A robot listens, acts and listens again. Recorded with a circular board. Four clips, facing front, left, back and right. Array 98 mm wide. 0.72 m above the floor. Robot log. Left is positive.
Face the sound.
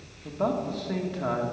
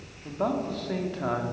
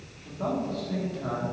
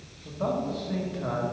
note: The man speaking: 50° left.
cmd yaw +50
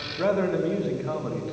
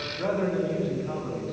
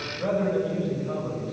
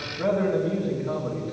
note: The man speaking is now 10° right.
cmd yaw -10
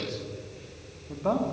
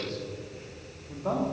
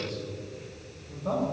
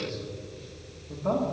end: Found it: a man speaking, straight ahead, 1 to 2 m away.